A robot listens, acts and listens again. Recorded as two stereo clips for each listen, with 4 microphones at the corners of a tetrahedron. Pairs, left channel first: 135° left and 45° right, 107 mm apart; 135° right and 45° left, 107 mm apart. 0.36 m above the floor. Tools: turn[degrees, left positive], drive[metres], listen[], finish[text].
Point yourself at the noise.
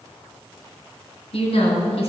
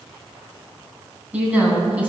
Thought: The woman speaking: 120° left.
Action: turn[120]
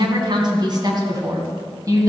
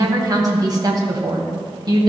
Action: finish[Facing the woman speaking.]